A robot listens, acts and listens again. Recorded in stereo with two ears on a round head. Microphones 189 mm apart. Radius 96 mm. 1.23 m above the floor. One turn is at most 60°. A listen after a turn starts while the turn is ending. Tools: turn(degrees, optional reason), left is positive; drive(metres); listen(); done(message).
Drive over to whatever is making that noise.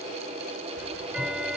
turn(degrees=-30)
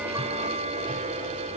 turn(degrees=-60, reason="So it is at 145° right.")
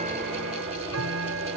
turn(degrees=-60, reason="The ticking is now 95° right.")
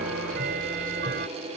turn(degrees=-50, reason="The ticking is now 50° right.")
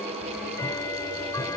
turn(degrees=15, reason="The ticking is now 15° left.")
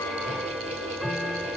drive(metres=1.0)
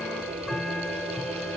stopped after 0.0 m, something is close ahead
done("Blocked. The ticking is further on, straight ahead.")